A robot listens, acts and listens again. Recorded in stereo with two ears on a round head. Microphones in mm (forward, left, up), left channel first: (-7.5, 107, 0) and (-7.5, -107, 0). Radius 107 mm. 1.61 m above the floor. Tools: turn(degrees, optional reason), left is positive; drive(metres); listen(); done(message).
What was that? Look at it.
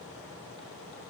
listen()
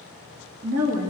turn(degrees=-90)
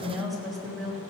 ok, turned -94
done("Facing the woman speaking, 2 to 4 m away.")